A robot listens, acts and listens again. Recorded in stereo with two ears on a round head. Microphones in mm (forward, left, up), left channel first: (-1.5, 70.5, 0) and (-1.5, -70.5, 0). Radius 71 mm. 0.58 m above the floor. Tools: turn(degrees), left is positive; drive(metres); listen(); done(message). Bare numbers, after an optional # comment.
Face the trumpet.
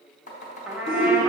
turn(-30)
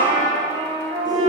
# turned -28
# So it is at 145° right.
turn(-145)
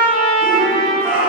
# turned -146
done("Facing the trumpet.")